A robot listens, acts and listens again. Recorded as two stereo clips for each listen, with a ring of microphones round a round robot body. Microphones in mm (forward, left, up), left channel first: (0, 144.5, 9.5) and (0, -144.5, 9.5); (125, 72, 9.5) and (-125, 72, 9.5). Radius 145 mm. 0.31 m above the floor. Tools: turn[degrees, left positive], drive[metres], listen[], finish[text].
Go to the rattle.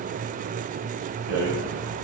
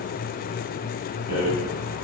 Thought: The rattle: 120° right.
Action: turn[-120]
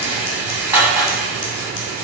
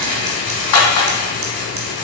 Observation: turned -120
Action: drive[1.0]
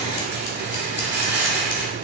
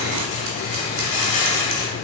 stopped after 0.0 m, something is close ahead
Thought: The rattle is now 10° right.
Action: turn[-10]
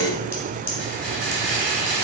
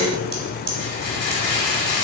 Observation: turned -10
Action: finish[Something is in my way. I am facing the rattle but have not reached it.]